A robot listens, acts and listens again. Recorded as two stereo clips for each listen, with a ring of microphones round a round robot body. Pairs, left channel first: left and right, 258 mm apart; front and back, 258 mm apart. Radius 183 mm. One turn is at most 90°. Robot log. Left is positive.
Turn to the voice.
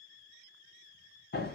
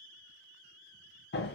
cmd idle
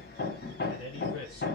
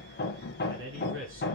note: The man speaking: 140° left.
cmd yaw +90
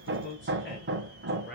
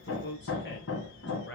note: The man speaking is now 45° left.
cmd yaw +45
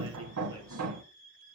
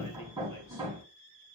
cmd idle
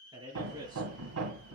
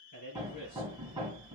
note: The man speaking is now 15° right.
cmd yaw -15
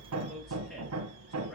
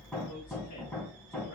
cmd idle
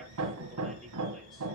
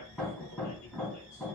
cmd idle
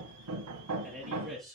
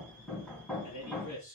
end: Facing the man speaking, over 4 m away.